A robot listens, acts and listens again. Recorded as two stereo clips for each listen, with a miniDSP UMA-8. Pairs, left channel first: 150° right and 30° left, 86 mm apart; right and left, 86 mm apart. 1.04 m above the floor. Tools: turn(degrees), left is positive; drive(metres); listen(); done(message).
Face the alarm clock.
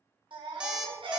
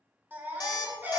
turn(degrees=-50)
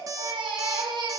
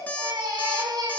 turn(degrees=-20)
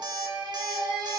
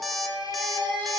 done("Found it: an alarm clock, straight ahead, 1 to 2 m away.")